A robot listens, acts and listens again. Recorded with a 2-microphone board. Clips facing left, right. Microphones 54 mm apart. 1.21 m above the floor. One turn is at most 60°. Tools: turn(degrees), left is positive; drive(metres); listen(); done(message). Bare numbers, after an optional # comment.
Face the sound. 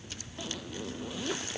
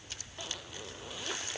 turn(-30)
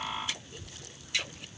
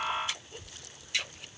listen()
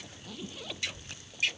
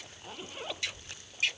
# So it is at 145° right.
turn(-60)
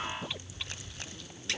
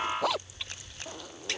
# The zipper is now 95° right.
turn(-60)
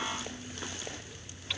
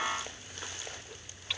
# Nothing new. It was at 35° right.
turn(-35)
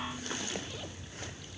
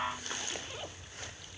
listen()
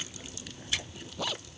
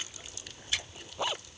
# The zipper is now 20° right.
turn(-20)
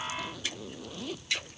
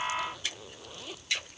done("Facing the zipper.")